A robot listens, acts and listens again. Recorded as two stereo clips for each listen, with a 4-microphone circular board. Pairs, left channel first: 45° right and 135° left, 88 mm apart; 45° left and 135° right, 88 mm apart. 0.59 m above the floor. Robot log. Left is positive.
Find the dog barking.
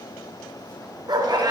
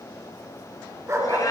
note: The dog barking: 170° left.
cmd yaw +170
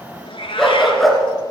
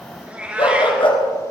note: The dog barking is now 45° left.
cmd yaw +45
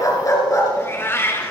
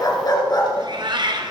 note: The dog barking is now 10° left.
cmd yaw +10
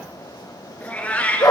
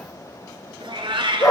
end: Facing the dog barking, 2 to 4 m away.